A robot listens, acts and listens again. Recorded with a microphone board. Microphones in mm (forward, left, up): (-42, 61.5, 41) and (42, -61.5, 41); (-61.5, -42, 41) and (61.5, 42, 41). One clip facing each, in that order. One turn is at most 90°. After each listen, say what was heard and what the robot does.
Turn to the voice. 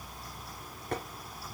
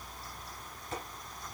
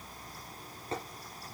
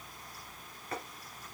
Keep listening.
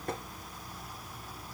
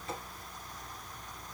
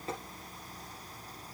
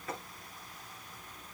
Keep listening.
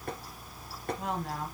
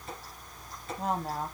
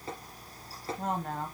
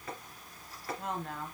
The woman speaking: 105° right. Turn 90° right.
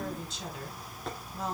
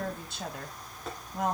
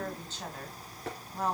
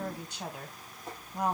The woman speaking is now 40° right. Turn 40° right.
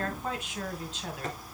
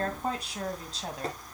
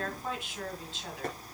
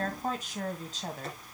The woman speaking is now 10° right. Turn 10° right.
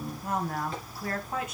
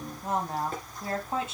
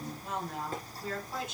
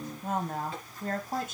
Facing the woman speaking, 2 to 4 m away.